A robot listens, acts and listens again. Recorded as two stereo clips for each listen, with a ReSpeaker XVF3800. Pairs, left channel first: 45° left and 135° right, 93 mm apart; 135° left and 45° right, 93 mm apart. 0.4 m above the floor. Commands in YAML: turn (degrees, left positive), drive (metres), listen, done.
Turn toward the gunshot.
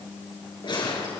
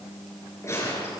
turn: 75
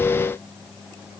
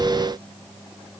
done: "Facing where the gunshot came from. I can't hear it now."